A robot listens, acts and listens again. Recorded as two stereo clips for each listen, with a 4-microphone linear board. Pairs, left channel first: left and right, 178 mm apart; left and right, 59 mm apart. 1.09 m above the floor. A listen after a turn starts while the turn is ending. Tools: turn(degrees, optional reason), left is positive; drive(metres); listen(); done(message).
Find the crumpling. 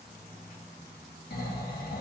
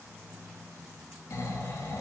listen()
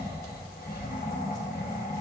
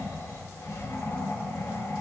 listen()
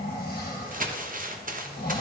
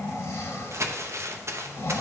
turn(degrees=-50, reason="The crumpling: about 50° right or 130° right.")
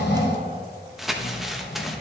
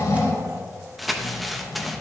done("Found it: crumpling, straight ahead, under 1 m away.")